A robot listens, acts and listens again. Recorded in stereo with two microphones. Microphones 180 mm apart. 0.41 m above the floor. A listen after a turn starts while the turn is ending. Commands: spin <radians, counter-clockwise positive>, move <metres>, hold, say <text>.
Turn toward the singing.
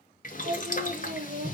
spin -1.57
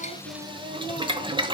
spin -0.17
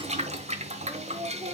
spin -0.35
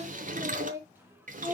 spin -0.44
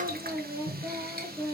spin -0.26
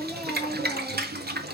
say Facing the singing, 1 to 2 m away.